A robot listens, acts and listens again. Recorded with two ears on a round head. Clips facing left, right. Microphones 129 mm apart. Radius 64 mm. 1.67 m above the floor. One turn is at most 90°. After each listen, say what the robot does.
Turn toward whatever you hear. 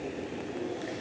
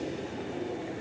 Keep listening.
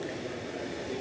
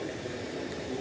Keep listening.
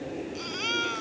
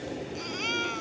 Turn 30° right.
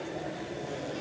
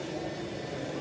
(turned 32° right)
Keep listening.
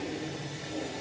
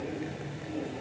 Keep listening.
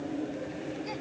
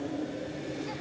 I heard a baby crying, but can't make it out now. It was about 30° left or 145° right.